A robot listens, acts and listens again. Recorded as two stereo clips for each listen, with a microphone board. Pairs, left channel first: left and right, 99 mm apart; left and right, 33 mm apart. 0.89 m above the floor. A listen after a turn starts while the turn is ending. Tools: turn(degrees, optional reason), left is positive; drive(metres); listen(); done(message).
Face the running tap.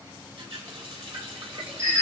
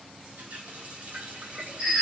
turn(degrees=-60, reason="The running tap: about 60° right or 120° right.")
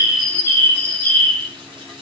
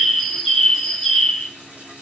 turn(degrees=-60, reason="So it is at 60° right.")
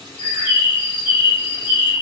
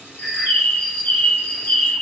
listen()
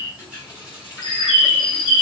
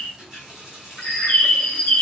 turn(degrees=-15, reason="The running tap is now 15° right.")
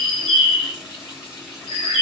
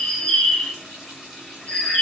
done("Found it: a running tap, straight ahead, 1 to 2 m away.")